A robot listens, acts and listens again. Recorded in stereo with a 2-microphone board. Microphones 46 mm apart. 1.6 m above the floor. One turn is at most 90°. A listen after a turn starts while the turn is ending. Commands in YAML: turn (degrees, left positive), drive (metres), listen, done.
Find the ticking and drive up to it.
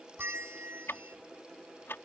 turn: 65
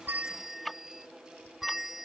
drive: 1.0
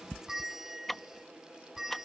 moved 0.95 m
drive: 1.0
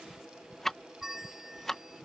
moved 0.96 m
drive: 1.0
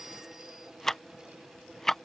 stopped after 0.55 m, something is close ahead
done: "Arrived at the ticking, straight ahead."